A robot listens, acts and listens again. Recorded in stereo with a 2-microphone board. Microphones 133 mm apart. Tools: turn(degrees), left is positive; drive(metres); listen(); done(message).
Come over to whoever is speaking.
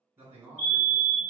turn(degrees=-15)
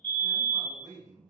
turn(degrees=-150)
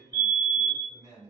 turn(degrees=-25)
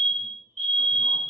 listen()
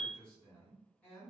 turn(degrees=10)
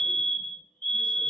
listen()
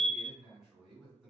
drive(metres=1.0)
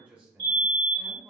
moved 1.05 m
turn(degrees=-10)
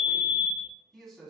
drive(metres=1.0)
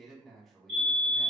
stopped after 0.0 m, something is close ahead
done("I am next to the man speaking.")